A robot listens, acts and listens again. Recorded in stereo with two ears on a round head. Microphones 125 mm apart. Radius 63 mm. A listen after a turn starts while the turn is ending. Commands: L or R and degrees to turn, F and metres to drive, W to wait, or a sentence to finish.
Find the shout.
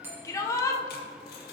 L20
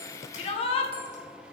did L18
L140
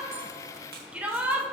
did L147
R10
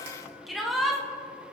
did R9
Facing the shout.